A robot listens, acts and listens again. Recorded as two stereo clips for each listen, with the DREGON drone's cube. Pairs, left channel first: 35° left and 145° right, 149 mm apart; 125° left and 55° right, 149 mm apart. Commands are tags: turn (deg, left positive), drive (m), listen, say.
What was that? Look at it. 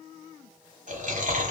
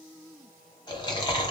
<turn deg="-175"/>
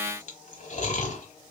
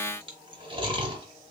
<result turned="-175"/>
<say>Found it: chewing, straight ahead.</say>